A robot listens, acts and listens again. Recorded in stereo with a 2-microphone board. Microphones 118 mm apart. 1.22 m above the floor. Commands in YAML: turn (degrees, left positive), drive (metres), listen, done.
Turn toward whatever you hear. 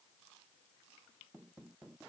listen: true
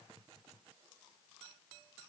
listen: true
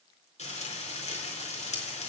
turn: 75
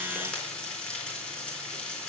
turn: 10
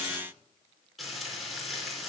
done: "Facing the frying."